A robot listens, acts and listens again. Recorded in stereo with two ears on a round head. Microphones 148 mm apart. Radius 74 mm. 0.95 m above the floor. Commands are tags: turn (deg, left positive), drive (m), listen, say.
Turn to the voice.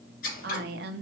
<turn deg="-65"/>
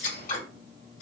<listen/>
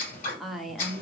<say>Facing the woman speaking.</say>